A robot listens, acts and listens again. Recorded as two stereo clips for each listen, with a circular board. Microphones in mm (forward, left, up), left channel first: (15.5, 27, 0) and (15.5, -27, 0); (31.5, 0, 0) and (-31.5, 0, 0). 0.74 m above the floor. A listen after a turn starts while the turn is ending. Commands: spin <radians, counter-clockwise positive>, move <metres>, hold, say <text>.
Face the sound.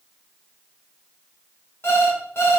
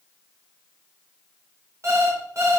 spin 2.36
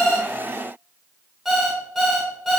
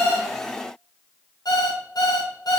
say Facing the alarm clock.